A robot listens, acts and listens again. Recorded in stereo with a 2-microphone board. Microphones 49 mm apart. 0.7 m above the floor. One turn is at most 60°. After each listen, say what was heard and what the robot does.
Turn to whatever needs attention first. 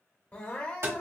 The crying: about 30° left or 150° left. Turn 30° left.
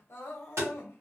So it is at 115° left. Turn 60° left.
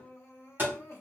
The crying is now 80° left. Turn 60° left.
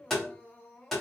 The crying is now 35° left. Turn 35° left.
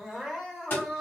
Facing the crying, 1 to 2 m away.